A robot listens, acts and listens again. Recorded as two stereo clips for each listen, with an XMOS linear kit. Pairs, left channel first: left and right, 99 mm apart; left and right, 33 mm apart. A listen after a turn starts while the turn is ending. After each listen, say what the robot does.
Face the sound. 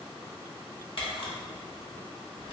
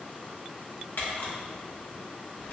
Turn 65° left.
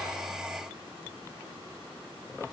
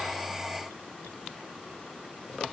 Keep listening.
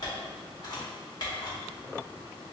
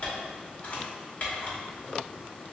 Turn 45° left.
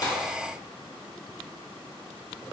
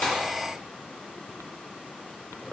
Keep listening.
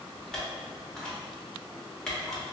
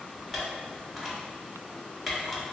Turn 10° left.
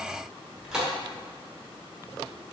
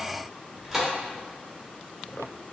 Facing the camera shutter.